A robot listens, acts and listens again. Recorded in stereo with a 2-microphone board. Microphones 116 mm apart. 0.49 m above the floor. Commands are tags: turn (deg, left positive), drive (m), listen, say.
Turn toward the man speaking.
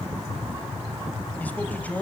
<turn deg="30"/>
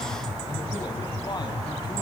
<listen/>
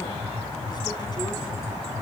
<listen/>
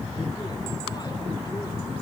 <say>I heard a man speaking, but can't make it out now. It was about 15° right or 135° left.</say>